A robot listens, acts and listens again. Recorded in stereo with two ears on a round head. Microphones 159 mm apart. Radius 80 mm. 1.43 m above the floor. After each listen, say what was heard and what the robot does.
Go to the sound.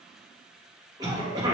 The cough: about 20° right or 160° right. Turn 20° right.
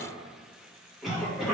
Drive 1.0 m forward.
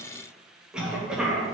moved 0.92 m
Drive 1.0 m forward.
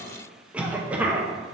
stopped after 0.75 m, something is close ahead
Arrived at the cough, straight ahead.